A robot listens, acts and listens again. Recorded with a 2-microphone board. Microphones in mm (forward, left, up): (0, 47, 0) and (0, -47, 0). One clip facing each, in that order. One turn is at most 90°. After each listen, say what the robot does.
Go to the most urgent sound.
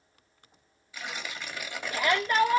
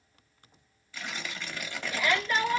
Turn 40° left.
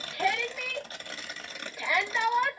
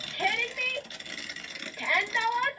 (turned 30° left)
Turn 10° left.
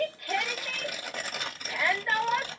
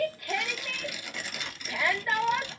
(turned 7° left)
Drive 1.0 m forward.
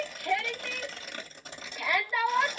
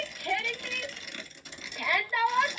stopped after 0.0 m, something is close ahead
Blocked. The shout is further on, straight ahead.